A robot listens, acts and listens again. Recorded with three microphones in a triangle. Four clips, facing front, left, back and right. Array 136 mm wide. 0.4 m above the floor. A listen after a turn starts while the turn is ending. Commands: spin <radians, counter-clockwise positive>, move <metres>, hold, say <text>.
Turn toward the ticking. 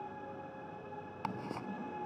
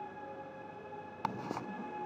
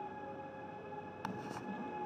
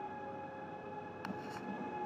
spin 1.22
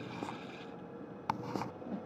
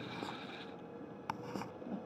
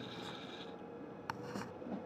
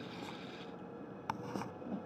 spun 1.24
say Facing the ticking.